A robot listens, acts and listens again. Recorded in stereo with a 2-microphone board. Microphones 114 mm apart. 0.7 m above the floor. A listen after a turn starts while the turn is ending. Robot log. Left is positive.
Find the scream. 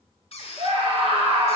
note: The scream: about 55° right or 125° right.
cmd yaw -55
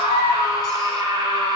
note: So it is at 45° right.
cmd yaw -45
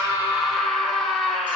end: Facing the scream.